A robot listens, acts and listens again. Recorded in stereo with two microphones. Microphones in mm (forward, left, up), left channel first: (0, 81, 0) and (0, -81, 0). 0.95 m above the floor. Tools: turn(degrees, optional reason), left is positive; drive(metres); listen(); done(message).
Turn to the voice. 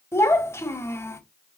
turn(degrees=30)
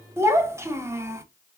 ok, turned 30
turn(degrees=-15, reason="So it is at 15° right.")
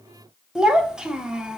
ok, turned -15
done("Found it: a child speaking, straight ahead, 1 to 2 m away.")